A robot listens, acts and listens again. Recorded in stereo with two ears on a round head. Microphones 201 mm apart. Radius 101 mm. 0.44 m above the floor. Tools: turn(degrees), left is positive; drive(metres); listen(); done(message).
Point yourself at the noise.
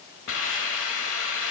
turn(degrees=60)
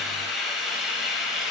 done("Facing the hiss.")